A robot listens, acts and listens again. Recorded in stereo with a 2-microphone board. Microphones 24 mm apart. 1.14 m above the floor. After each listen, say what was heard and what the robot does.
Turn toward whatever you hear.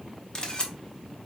The camera shutter: about 35° left or 145° left. Turn 35° left.
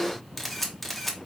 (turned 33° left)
Found it: a camera shutter, straight ahead, 1 to 2 m away.